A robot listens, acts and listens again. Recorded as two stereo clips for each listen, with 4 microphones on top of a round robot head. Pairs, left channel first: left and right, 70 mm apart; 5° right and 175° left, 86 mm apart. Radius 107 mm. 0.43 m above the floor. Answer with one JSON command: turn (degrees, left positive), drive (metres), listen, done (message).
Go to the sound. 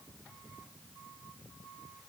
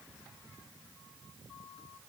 {"listen": true}
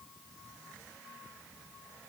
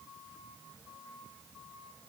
{"listen": true}
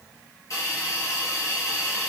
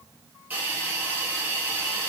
{"turn": 115}
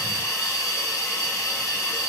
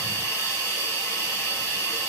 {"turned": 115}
{"turn": 50}
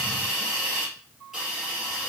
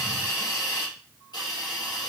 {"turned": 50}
{"drive": 1.0}
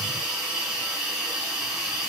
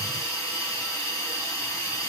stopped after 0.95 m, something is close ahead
{"turn": -10}
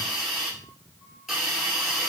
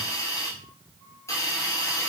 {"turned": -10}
{"done": "Arrived at the hiss, straight ahead."}